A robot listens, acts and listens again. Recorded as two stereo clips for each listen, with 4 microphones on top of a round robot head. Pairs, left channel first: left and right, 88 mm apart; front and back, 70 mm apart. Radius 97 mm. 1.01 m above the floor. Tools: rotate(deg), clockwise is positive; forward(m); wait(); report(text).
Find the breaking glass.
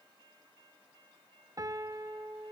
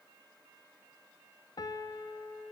wait()
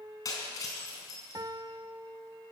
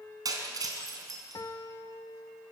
rotate(-150)
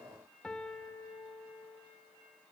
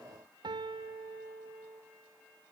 report("Facing where the breaking glass came from. I can't hear it now.")